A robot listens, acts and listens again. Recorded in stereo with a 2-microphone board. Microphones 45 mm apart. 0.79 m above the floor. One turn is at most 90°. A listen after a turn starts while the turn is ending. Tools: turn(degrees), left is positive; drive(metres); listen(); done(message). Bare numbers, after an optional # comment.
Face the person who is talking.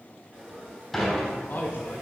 # The man speaking: about 45° left or 135° left.
turn(45)
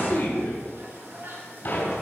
# So it is at 90° left.
turn(90)
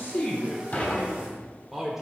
done("Found it: a man speaking, straight ahead.")